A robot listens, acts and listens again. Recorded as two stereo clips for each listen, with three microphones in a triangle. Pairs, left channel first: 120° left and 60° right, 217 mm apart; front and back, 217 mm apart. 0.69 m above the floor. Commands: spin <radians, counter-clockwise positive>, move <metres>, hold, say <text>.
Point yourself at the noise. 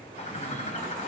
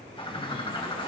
spin 1.13
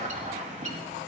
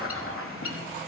say Found it: a bird, straight ahead, 1 to 2 m away.